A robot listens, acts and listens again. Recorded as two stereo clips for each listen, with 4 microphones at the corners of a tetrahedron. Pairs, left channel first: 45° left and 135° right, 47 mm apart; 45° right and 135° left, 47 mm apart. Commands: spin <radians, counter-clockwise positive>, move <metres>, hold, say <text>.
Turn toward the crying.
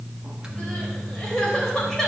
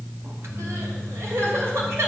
spin 2.09
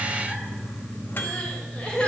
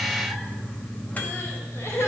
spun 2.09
spin -0.35
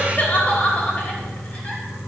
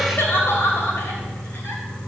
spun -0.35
spin -0.17
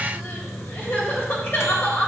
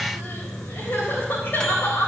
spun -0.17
say Facing the crying.